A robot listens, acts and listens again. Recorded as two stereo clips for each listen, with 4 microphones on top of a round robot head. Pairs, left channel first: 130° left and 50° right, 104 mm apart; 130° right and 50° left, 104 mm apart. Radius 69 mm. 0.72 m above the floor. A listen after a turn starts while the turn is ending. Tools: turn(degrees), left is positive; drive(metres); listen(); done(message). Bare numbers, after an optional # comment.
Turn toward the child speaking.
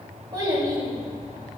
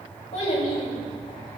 # The child speaking: 100° right.
turn(-100)
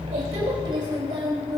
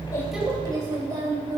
done("Found it: a child speaking, straight ahead.")